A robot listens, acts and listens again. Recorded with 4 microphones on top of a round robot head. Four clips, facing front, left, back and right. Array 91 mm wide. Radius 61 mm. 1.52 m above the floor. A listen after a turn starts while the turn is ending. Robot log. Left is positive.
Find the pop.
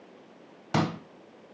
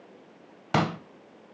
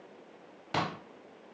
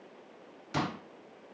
note: The pop: 80° left.
cmd yaw +80
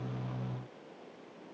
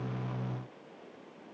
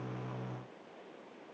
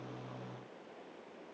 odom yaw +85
end: I heard a pop from this way, but can't make it out now.